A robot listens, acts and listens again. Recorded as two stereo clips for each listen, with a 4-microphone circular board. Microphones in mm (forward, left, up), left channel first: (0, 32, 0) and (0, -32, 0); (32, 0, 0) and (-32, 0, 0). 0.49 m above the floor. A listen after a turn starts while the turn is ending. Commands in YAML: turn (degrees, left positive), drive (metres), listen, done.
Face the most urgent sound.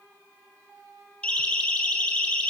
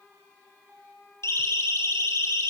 turn: 25
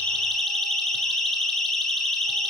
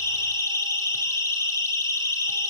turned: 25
turn: 10
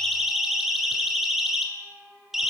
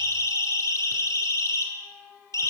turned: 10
done: "Found it: a siren, straight ahead, 2 to 4 m away."